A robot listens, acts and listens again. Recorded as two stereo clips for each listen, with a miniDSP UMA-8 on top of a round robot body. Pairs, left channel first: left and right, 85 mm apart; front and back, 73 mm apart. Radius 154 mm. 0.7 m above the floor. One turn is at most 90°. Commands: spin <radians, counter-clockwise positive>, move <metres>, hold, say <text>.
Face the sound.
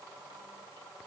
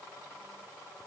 hold
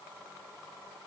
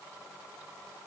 hold
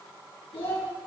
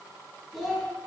spin 1.57
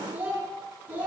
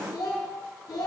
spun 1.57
spin -0.44
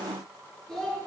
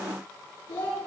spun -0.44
spin 0.17
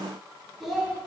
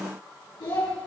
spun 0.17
say Facing the child speaking, over 4 m away.